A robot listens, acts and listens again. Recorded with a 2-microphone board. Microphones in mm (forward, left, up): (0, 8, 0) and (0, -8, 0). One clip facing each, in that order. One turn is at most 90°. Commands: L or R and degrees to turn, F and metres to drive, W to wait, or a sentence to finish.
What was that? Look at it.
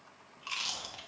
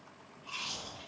L75
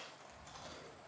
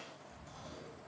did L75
L30
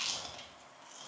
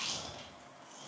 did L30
L15
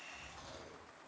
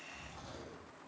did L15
Found it: chewing, straight ahead, 1 to 2 m away.